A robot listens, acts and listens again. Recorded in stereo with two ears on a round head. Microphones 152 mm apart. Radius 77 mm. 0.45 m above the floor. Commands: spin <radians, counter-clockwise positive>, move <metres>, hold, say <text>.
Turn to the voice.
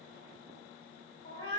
hold
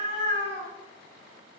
hold
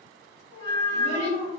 spin 0.79
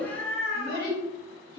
spin 1.40
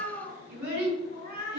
spin -0.17
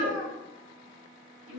say Facing the child speaking.